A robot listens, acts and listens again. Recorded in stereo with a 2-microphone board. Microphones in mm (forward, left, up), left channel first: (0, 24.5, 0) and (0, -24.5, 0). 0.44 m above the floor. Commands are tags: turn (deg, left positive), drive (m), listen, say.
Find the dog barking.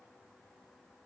<listen/>
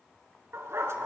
<turn deg="-70"/>
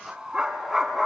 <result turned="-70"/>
<say>Facing the dog barking.</say>